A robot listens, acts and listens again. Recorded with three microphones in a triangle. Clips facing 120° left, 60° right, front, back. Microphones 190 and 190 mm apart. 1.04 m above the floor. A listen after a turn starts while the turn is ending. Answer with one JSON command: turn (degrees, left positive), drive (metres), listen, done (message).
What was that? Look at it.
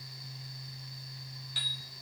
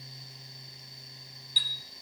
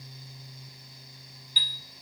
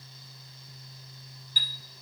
{"turn": 140}
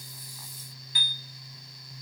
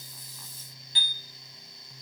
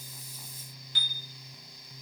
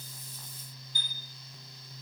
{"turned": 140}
{"done": "Facing the chime, 1 to 2 m away."}